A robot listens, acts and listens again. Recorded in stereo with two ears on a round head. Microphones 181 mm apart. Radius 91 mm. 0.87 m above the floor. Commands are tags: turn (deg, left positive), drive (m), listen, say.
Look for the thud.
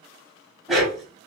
<listen/>
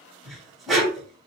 <listen/>
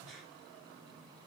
<say>I can't make out a thud to turn to.</say>